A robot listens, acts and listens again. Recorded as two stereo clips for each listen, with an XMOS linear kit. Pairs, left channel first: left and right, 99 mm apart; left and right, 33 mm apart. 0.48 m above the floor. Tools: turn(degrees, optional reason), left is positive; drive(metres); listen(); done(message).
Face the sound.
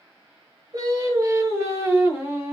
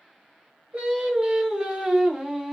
turn(degrees=-20, reason="The singing: about 20° right or 160° right.")
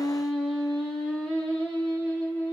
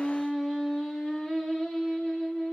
turn(degrees=20, reason="So it is at 20° left.")
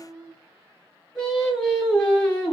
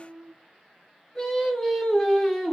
turn(degrees=10, reason="The singing is now 10° left.")
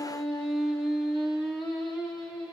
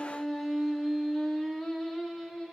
done("Facing the singing, 2 to 4 m away.")